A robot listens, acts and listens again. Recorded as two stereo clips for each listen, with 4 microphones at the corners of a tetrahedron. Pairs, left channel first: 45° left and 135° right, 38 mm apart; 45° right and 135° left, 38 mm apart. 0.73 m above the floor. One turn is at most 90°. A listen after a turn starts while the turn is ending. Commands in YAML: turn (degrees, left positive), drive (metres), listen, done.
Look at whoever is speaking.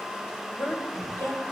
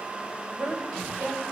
turn: 80
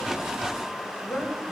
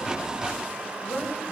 done: "Facing the woman speaking, 2 to 4 m away."